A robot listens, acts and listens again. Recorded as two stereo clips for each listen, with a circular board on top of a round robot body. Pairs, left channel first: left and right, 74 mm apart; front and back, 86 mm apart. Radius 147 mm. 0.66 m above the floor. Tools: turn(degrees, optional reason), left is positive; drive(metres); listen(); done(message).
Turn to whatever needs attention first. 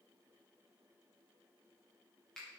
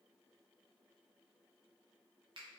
listen()
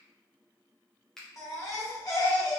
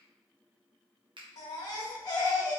turn(degrees=45, reason="The baby crying: 45° left.")
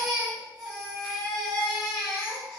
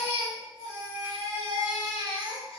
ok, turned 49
done("Facing the baby crying, under 1 m away.")